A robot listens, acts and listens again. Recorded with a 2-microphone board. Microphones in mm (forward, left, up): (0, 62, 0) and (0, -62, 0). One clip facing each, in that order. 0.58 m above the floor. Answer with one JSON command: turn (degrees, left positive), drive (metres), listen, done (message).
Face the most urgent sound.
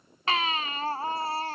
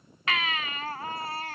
{"turn": 35}
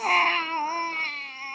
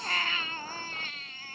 {"turn": 110}
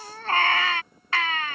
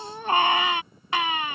{"turn": -15}
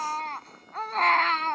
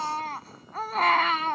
{"done": "Found it: a baby crying, straight ahead."}